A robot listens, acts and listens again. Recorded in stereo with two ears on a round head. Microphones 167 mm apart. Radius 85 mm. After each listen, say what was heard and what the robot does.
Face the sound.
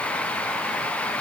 Keep listening.
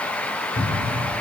The cupboard door: about 55° left or 125° left. Turn 55° left.
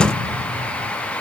Keep listening.
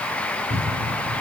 So it is at 70° left. Turn 70° left.
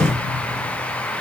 The cupboard door is now 15° right. Turn 15° right.
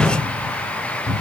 Found it: a cupboard door, straight ahead, 2 to 4 m away.